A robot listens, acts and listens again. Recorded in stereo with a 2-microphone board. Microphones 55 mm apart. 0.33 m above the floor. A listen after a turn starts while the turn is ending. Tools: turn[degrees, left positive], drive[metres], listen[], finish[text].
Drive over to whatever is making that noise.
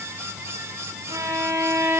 Thought: The violin: about 65° right or 115° right.
Action: turn[-65]
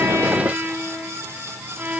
Thought: So it is at 35° right.
Action: turn[-35]
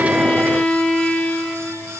Thought: The violin is now 20° left.
Action: turn[20]
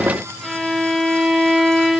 Action: drive[1.0]
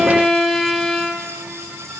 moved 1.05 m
Action: drive[1.0]
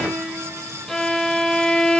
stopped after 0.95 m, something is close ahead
Thought: The violin is now 20° left.
Action: turn[20]
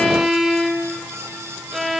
Action: finish[Arrived at the violin, straight ahead.]